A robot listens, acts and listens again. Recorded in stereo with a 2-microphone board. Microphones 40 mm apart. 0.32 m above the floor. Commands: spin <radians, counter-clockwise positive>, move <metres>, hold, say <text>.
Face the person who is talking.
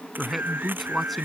spin 0.52
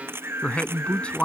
spin 2.62
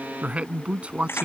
spin -0.61
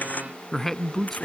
spin 0.17
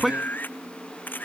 say Found it: a man speaking, straight ahead.